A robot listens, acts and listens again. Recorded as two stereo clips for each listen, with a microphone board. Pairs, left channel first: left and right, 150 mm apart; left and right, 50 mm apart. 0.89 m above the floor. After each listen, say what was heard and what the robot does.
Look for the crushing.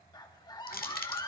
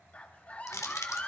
Turn 90° left.
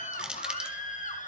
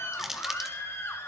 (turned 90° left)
Facing the crushing.